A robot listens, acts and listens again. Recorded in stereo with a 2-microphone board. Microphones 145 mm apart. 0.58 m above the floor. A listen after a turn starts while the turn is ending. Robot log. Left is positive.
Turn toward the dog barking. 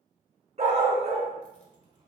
note: The dog barking: about 45° right or 135° right.
cmd yaw -45
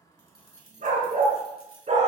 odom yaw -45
note: So it is at 125° right.
cmd yaw -125
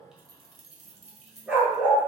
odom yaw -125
note: The dog barking is now 10° right.
cmd yaw -10
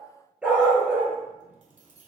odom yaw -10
note: The dog barking is now 10° right.
cmd yaw -10
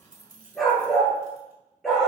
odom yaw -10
end: Facing the dog barking.